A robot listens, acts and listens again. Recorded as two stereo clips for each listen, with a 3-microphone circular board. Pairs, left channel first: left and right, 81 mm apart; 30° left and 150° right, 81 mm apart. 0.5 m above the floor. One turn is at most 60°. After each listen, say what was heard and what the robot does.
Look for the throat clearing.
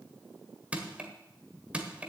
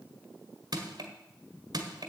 Keep listening.
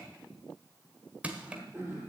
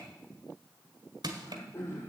The throat clearing: 25° right. Turn 25° right.
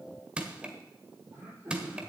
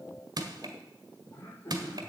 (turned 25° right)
The throat clearing is now 25° right. Turn 25° right.
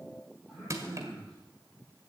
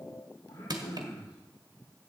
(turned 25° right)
Found it: throat clearing, straight ahead.